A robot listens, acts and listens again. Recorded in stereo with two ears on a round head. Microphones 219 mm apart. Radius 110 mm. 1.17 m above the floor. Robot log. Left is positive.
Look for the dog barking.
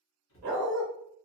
note: The dog barking: about 40° right or 140° right.
cmd yaw -40
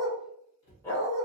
note: So it is at 15° left.
cmd yaw +15
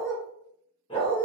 note: The dog barking is now 25° left.
cmd yaw +25
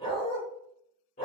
note: The dog barking is now 35° left.
cmd yaw +35
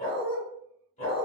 note: The dog barking is now 25° left.
cmd yaw +25
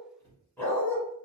note: The dog barking is now 10° left.
cmd yaw +10
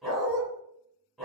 end: Found it: a dog barking, straight ahead.